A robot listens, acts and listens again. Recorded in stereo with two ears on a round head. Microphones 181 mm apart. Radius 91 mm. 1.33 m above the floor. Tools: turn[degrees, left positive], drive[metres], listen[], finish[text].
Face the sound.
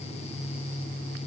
Action: listen[]
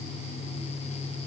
Action: listen[]
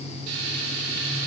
Action: turn[-90]
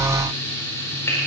Thought: So it is at 10° left.
Action: turn[10]
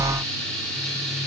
Action: finish[Facing the frying, over 4 m away.]